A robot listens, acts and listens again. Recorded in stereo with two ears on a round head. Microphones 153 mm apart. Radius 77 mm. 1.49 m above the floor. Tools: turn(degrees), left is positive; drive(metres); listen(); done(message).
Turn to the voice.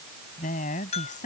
turn(degrees=50)
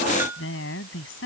turn(degrees=85)
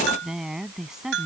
done("Facing the woman speaking.")